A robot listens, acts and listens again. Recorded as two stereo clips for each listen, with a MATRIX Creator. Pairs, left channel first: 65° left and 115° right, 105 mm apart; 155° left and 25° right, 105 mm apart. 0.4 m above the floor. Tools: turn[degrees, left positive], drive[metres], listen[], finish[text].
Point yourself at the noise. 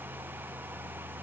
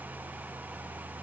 Action: listen[]
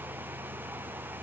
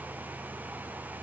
Action: listen[]
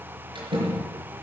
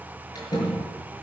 Thought: The door slam: 150° right.
Action: turn[-150]
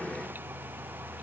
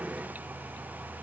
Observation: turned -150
Action: finish[Facing where the door slam came from. I can't hear it now.]